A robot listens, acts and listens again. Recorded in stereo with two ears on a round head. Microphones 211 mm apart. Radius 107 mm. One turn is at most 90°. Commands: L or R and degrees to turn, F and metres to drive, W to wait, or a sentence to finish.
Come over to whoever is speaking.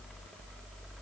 W
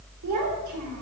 R75
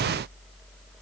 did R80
W
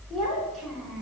F1.0
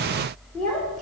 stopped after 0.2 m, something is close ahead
Something is in my way. I am facing the child speaking but have not reached it.